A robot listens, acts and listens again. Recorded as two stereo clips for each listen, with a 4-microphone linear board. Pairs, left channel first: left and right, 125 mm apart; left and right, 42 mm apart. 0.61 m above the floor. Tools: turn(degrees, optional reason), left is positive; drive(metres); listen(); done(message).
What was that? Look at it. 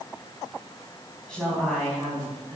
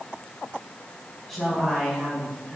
turn(degrees=30)
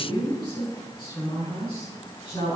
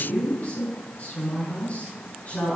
turn(degrees=140, reason="So it is at 140° left.")
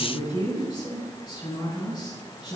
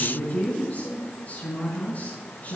turn(degrees=30, reason="The woman speaking is now 30° left.")
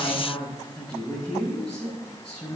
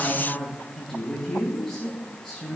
done("Facing the woman speaking.")